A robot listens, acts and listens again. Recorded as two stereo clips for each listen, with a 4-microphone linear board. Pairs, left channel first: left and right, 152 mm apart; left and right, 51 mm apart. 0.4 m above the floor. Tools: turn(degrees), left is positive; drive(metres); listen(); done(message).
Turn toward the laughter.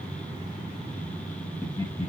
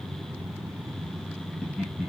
turn(degrees=15)
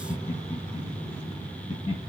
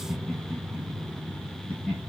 turn(degrees=150)
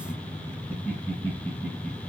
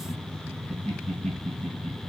turn(degrees=15)
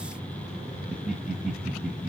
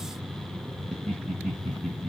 done("Facing the laughter.")